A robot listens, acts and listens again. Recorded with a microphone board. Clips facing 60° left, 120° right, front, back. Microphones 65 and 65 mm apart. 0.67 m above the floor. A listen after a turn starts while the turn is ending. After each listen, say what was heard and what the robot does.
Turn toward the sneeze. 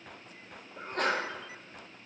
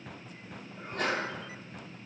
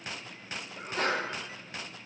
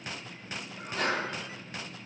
The sneeze: 45° left. Turn 45° left.
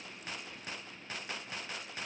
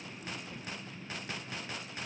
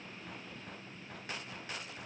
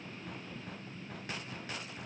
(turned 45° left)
I heard a sneeze from this way, but can't make it out now.